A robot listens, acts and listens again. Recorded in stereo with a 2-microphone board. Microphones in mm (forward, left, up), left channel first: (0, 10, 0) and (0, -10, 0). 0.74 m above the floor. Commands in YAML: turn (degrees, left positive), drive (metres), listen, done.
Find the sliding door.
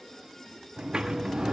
turn: -45
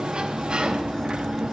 turn: -75
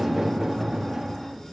turn: -25
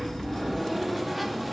turn: -10
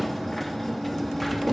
done: "Found it: a sliding door, straight ahead, under 1 m away."